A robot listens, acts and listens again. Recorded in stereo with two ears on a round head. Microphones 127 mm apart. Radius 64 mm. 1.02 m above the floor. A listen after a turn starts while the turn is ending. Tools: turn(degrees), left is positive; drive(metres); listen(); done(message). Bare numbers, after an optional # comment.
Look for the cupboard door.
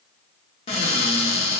# The cupboard door: about 45° left or 135° left.
turn(45)
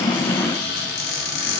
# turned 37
# So it is at 100° left.
turn(100)
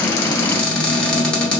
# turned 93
# The cupboard door is now 10° left.
turn(10)
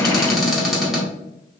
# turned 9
done("Facing the cupboard door, under 1 m away.")